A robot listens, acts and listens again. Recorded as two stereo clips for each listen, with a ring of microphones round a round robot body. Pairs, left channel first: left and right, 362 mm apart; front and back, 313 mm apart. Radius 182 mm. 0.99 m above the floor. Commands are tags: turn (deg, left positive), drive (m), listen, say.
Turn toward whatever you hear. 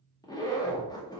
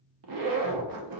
<turn deg="170"/>
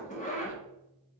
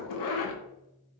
<turn deg="20"/>
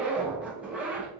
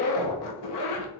<say>Facing the zipper, under 1 m away.</say>